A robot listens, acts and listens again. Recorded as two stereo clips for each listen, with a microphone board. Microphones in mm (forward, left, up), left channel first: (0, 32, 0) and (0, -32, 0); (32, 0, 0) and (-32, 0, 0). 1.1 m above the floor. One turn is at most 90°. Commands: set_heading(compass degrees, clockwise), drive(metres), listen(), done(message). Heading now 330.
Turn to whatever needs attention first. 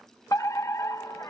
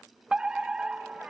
set_heading(240)
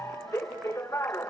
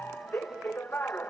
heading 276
set_heading(221)
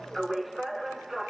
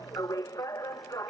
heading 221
done("Facing the fire alarm.")